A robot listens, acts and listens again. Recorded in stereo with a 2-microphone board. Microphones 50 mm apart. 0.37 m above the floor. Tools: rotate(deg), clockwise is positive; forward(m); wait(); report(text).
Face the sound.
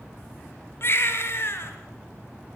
rotate(-50)
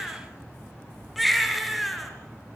report("Found it: a baby crying, straight ahead, 2 to 4 m away.")